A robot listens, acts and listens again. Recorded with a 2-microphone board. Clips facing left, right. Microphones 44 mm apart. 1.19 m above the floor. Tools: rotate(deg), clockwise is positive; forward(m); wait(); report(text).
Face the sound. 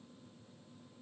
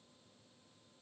wait()
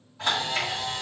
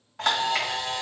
rotate(70)
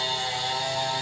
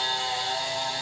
rotate(10)
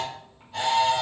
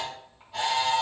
report("Found it: a camera shutter, straight ahead.")